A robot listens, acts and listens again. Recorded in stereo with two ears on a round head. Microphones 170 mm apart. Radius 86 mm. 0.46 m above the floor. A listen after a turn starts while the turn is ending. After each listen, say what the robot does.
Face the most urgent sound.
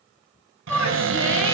Turn 30° left.
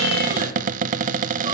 Keep listening.
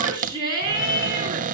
Turn 25° right.
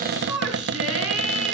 Facing the shout, over 4 m away.